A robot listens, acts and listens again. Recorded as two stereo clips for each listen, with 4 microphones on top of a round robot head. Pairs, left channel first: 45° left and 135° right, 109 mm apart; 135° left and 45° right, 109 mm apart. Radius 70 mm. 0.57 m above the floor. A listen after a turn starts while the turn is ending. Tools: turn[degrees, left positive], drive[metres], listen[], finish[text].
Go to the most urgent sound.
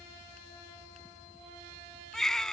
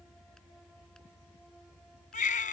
Thought: The baby crying: 135° left.
Action: turn[135]
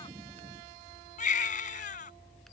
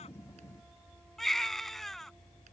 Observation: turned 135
Thought: The baby crying is now 45° left.
Action: turn[45]
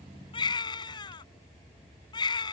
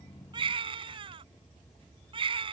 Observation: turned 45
Action: drive[1.0]
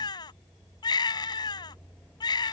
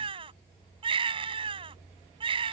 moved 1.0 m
Action: drive[1.0]
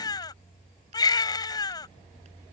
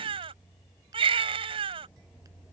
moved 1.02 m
Action: drive[1.0]
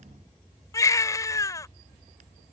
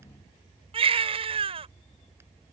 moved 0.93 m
Thought: The baby crying is now 15° right.
Action: turn[-15]
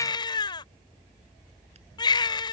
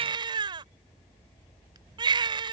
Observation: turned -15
Action: drive[1.0]
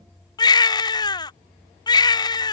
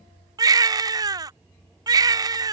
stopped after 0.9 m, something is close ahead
Action: finish[Arrived at the baby crying, straight ahead.]